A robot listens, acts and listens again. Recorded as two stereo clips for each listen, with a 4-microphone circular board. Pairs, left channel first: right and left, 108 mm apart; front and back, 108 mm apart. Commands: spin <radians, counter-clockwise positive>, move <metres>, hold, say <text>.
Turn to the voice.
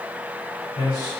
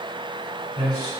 spin -2.36
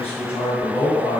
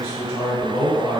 spin -0.44
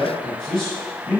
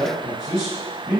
say Facing the man speaking, 1 to 2 m away.